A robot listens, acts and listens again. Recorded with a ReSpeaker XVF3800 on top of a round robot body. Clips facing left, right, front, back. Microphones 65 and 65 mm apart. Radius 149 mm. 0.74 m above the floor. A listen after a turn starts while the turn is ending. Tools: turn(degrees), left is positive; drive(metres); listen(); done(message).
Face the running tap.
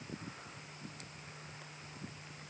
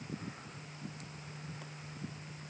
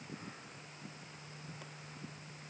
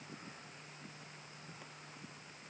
listen()
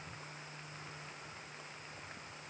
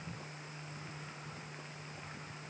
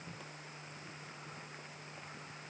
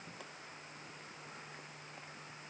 listen()
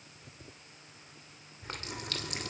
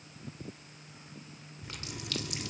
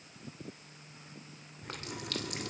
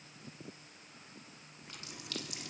turn(degrees=40)
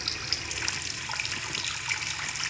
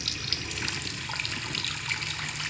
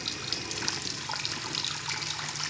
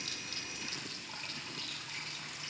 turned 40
done("Found it: a running tap, straight ahead.")